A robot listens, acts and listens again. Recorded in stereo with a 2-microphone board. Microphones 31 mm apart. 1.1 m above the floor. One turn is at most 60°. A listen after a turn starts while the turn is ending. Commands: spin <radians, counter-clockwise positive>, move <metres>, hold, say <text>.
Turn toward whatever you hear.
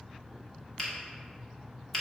spin 0.52
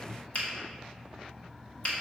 spin 1.05
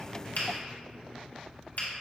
spin 1.05
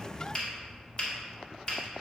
spin 0.52
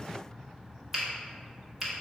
spin -0.17
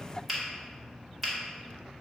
say Found it: a finger snap, straight ahead.